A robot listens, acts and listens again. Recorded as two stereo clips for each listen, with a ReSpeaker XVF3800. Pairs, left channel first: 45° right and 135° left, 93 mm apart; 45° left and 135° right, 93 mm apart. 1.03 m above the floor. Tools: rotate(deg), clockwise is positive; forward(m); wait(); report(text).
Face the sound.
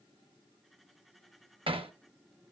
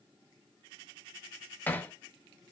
rotate(-115)
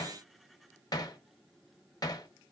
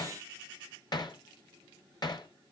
report("Facing the hammering.")